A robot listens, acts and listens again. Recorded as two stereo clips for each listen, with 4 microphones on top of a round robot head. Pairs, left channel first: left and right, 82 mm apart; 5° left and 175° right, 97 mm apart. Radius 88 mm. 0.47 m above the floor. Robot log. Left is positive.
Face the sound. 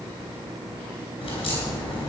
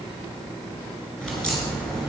note: The crack: 85° left.
cmd yaw +85
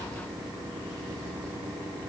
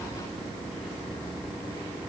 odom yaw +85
end: Facing where the crack came from. I can't hear it now.